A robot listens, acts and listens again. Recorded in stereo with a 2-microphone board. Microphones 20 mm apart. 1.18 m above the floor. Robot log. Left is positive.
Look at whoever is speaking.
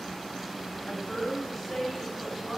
note: The woman speaking: about 25° left or 155° left.
cmd yaw +25
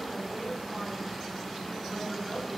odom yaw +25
end: Facing the woman speaking.